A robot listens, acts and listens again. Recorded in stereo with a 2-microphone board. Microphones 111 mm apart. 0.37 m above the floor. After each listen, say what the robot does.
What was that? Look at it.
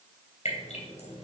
Turn 60° left.
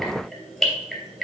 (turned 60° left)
Found it: dripping, straight ahead.